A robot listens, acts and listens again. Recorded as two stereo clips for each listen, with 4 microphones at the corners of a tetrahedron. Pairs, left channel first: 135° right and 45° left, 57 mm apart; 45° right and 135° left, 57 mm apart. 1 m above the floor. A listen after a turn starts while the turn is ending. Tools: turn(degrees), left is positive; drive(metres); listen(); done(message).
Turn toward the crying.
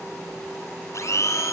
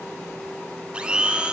listen()
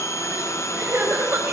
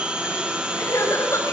done("Facing the crying, over 4 m away.")